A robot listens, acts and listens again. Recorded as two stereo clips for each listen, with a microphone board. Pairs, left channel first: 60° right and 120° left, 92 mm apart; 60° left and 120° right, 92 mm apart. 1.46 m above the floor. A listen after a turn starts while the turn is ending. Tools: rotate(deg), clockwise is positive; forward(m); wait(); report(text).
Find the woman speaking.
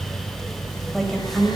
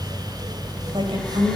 rotate(150)
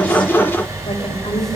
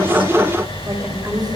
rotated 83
rotate(65)
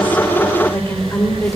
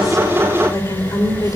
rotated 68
rotate(-10)
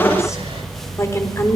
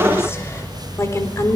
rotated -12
report("Found it: a woman speaking, straight ahead.")